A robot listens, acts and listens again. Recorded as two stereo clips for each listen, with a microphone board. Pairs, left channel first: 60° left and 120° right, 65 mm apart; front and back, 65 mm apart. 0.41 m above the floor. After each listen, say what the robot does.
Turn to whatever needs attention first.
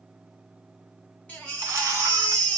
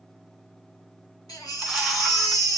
Turn 10° right.
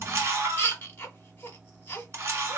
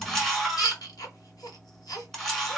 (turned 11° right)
Found it: a baby crying, straight ahead, 1 to 2 m away.